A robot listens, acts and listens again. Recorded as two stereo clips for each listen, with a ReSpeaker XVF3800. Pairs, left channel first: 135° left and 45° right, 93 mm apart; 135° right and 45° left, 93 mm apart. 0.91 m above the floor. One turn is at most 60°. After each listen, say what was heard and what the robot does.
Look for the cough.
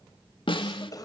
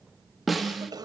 The cough: 90° left. Turn 60° left.
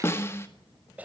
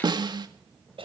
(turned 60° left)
The cough is now 30° left. Turn 30° left.
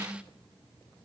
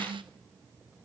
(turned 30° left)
Keep listening.
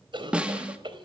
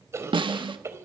The cough is now 15° right. Turn 15° right.
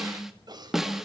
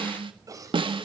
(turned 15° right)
Found it: a cough, straight ahead.